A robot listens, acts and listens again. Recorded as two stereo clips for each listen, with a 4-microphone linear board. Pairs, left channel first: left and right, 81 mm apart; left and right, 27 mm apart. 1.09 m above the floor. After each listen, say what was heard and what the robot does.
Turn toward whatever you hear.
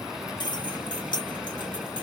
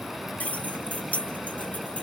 Turn 90° left.
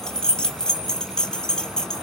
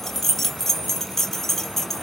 So it is at 10° left. Turn 10° left.
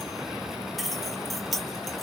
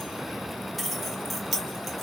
Found it: keys jangling, straight ahead, 2 to 4 m away.